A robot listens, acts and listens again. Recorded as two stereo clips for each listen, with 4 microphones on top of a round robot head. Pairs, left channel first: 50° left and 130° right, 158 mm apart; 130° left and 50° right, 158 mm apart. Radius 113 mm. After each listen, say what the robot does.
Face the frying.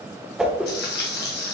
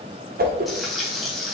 Turn 40° left.
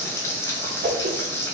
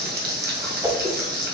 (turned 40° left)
Turn 25° right.
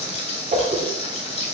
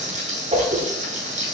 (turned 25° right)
Found it: frying, straight ahead, 2 to 4 m away.